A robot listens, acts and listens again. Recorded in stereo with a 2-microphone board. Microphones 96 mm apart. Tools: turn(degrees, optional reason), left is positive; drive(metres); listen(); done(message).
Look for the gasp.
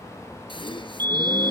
turn(degrees=60, reason="The gasp: about 60° left or 120° left.")
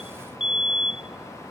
listen()
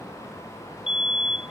done("I heard a gasp, but can't make it out now. It was about straight ahead or 60° left.")